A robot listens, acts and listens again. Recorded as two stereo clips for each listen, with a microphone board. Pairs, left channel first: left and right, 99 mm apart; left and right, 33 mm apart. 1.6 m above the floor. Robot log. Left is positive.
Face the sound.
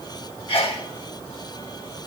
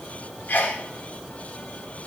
note: The sneeze: about 70° left or 110° left.
cmd yaw +70
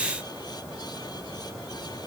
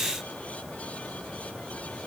cmd idle
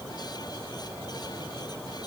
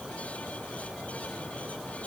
end: I heard a sneeze, but can't make it out now. It was about straight ahead or 40° left.